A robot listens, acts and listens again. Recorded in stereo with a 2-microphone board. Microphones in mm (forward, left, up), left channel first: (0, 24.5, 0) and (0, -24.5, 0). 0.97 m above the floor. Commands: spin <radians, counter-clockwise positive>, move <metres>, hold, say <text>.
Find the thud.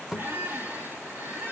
spin -0.52
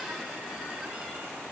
hold
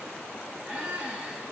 say I heard a thud, but can't make it out now. It was about 20° left or 140° right.